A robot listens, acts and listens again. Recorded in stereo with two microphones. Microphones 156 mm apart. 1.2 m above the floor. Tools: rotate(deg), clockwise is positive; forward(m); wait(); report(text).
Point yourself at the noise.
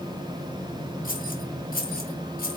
rotate(-75)
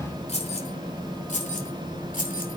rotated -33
rotate(-60)
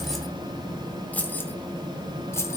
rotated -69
rotate(-15)
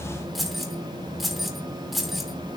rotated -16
report("Found it: keys jangling, straight ahead, 2 to 4 m away.")